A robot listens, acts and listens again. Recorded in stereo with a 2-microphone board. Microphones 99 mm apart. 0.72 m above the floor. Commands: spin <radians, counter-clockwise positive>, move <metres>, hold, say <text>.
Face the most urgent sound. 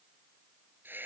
hold
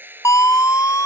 spin 0.61
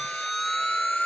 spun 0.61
say Facing the siren.